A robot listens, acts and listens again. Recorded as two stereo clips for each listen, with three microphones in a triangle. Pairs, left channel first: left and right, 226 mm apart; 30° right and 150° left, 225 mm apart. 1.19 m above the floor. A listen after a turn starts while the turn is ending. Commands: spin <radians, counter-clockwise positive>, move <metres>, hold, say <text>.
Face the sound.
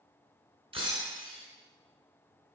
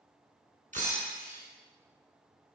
spin -2.71
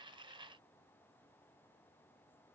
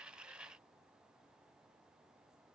say I heard breaking glass from this way, but can't make it out now.